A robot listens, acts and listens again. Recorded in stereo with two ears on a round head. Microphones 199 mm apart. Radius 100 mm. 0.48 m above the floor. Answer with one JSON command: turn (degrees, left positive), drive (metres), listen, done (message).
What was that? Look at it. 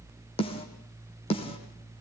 {"turn": 25}
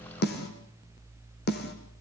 {"turn": 130}
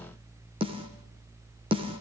{"turn": -25}
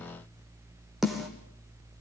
{"done": "Found it: a snare drum, straight ahead."}